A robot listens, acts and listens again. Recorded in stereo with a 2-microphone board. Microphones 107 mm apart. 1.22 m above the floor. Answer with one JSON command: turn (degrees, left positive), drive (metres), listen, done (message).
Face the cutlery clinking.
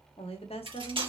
{"turn": -55}
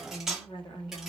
{"done": "Found it: cutlery clinking, straight ahead."}